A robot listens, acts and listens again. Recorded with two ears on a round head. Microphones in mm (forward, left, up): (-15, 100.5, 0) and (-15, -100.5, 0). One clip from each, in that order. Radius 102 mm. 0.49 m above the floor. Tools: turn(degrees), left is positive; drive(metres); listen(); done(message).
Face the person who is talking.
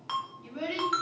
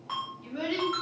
turn(degrees=-55)
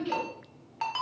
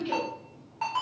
turn(degrees=-10)
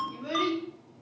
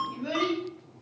done("Facing the child speaking.")